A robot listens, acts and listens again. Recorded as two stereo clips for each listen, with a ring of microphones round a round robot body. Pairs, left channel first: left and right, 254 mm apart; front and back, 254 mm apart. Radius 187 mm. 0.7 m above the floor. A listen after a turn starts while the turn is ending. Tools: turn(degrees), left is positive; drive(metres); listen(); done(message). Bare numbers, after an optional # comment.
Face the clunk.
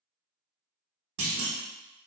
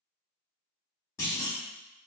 # The clunk: 80° right.
turn(-80)
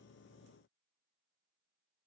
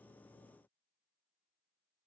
done("I heard a clunk from this way, but can't make it out now.")